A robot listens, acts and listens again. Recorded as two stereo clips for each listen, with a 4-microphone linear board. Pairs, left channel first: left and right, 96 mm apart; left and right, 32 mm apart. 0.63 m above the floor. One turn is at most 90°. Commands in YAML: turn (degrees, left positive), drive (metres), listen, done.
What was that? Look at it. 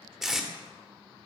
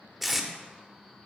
turn: -30
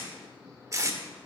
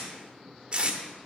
turn: -90
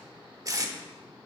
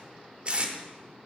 turn: -35
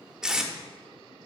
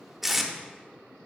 turn: -10
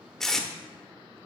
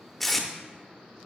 done: "Found it: tape being pulled, straight ahead."